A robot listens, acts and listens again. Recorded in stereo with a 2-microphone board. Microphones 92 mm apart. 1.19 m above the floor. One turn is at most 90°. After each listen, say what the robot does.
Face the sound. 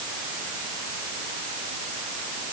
Keep listening.
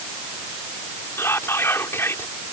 Turn 25° left.
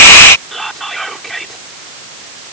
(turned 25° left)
Facing the whispering.